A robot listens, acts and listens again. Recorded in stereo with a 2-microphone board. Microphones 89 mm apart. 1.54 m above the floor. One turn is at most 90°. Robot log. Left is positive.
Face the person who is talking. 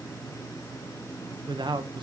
note: The man speaking: about 60° right or 120° right.
cmd yaw -60
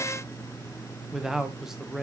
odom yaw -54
end: Found it: a man speaking, straight ahead.